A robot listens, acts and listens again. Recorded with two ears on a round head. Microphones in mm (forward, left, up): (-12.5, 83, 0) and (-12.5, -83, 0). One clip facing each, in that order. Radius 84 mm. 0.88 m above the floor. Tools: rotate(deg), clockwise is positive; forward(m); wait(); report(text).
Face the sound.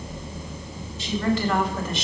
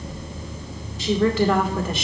rotate(65)
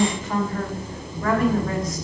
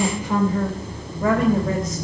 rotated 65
rotate(25)
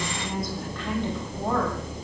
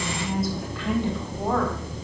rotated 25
wait()
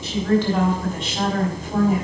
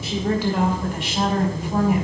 rotate(10)
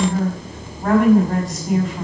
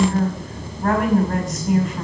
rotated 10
report("Found it: a woman speaking, straight ahead, over 4 m away.")